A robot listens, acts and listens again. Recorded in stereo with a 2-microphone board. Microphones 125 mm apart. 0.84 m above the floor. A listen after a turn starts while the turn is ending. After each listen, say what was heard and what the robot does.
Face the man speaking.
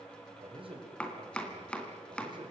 The man speaking: about 40° right or 140° right. Turn 40° right.
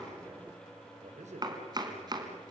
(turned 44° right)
So it is at 110° right. Turn 110° right.
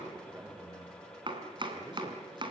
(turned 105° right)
The man speaking is now 25° right. Turn 25° right.
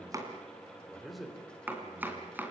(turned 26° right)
Facing the man speaking.